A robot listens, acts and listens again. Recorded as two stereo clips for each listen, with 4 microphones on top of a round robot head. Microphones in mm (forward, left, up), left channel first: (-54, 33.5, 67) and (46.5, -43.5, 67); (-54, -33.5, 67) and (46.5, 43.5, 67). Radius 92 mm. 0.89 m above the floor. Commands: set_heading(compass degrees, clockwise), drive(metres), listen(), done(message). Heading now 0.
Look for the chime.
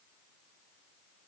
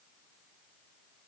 listen()
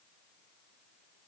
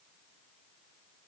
listen()
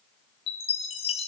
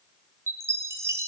set_heading(255)
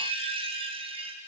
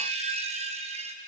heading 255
done("Facing the chime, under 1 m away.")